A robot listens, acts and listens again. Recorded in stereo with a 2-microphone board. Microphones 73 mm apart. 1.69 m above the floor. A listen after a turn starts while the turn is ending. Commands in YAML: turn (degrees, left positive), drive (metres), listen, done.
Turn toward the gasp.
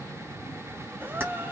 turn: -25
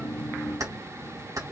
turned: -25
listen: true
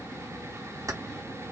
done: "I heard a gasp, but can't make it out now. It was about straight ahead or 130° right."